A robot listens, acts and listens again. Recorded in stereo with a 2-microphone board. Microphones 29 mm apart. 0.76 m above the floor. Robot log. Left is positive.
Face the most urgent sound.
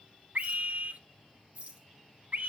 note: The scream: about 60° right or 120° right.
cmd yaw -60
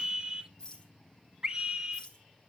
note: So it is at 35° right.
cmd yaw -35
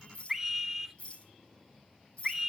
note: The scream is now 20° right.
cmd yaw -20
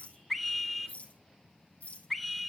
end: Found it: a scream, straight ahead.